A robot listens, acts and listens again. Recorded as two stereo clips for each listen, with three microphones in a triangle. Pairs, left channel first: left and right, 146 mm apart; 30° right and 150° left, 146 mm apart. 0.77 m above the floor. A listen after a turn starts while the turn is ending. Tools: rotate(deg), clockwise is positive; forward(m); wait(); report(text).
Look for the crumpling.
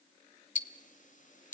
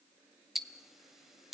wait()
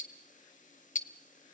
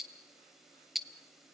wait()
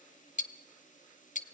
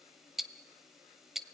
report("I can't make out crumpling, only ticking.")